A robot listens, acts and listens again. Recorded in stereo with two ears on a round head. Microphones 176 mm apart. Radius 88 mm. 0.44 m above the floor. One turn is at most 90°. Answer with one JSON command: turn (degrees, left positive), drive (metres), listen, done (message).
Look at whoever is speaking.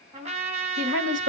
{"turn": -65}
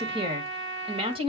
{"turn": -35}
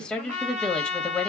{"done": "Facing the woman speaking, 1 to 2 m away."}